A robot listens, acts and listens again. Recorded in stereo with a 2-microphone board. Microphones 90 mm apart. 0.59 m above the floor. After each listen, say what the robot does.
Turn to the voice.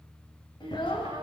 Turn 60° left.
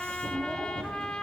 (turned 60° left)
Keep listening.
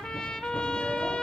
Keep listening.
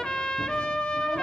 I heard a child speaking, but can't make it out now. It was about straight ahead or 60° left.